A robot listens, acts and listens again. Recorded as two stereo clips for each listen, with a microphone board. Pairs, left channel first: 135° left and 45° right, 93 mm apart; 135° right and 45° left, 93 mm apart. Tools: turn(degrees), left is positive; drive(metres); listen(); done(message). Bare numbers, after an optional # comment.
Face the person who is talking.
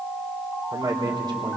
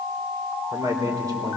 done("Facing the man speaking.")